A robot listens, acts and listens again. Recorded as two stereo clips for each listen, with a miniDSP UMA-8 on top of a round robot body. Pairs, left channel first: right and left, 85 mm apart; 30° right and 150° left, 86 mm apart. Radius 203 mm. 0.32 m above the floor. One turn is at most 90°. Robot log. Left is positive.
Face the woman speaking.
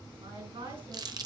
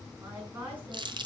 note: The woman speaking: 80° left.
cmd yaw +80
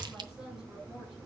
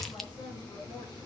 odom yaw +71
note: Nothing new. It was at 10° left.
cmd yaw +10
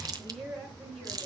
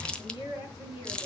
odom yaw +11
end: Found it: a woman speaking, straight ahead, over 4 m away.